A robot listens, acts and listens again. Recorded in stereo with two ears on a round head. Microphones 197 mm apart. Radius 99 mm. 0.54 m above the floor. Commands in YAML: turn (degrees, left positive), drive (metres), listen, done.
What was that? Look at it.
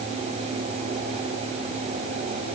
listen: true
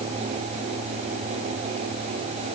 listen: true
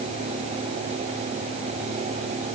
done: "I can't make out anything to turn to."